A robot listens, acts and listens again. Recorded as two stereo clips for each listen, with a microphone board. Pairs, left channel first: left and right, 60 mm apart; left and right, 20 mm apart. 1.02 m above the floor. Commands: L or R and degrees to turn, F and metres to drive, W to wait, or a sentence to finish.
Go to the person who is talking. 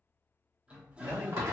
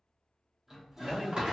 R90
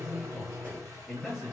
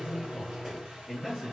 F1.0
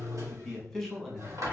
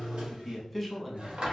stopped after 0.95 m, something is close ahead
Arrived at the man speaking, straight ahead.